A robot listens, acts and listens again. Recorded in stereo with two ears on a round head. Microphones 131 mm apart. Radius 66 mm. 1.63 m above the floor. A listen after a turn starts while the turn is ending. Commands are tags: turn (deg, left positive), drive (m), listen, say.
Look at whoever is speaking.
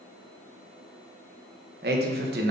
<turn deg="-90"/>
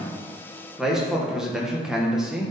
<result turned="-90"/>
<say>Facing the man speaking, 1 to 2 m away.</say>